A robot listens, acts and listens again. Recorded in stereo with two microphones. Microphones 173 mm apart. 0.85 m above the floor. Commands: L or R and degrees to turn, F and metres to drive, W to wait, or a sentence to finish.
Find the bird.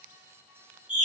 W
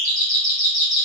W
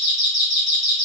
I can't make out a bird, only a doorbell.